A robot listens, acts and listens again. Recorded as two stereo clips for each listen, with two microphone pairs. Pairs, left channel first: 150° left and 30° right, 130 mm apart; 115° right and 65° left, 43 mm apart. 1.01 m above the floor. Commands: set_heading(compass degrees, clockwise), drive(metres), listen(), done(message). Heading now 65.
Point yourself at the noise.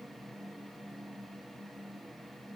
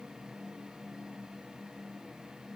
listen()
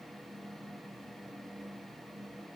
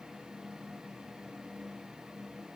listen()
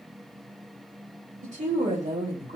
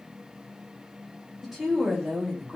set_heading(80)
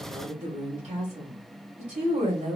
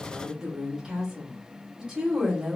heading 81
done("Facing the woman speaking, 2 to 4 m away.")